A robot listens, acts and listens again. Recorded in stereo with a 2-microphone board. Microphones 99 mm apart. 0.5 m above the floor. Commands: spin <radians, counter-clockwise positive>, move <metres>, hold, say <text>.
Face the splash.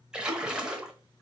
spin -0.52
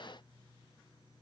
hold
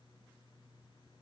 say I heard a splash, but can't make it out now. It was about 20° left or 140° right.